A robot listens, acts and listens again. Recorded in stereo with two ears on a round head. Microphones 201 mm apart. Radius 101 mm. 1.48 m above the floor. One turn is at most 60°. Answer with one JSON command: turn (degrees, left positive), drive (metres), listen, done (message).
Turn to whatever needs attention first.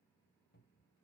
{"listen": true}
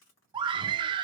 {"turn": -20}
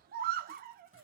{"turn": -60}
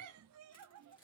{"turn": -60}
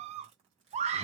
{"turn": -30}
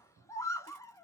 {"turn": 15}
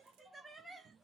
{"listen": true}
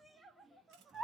{"done": "Facing the scream, under 1 m away."}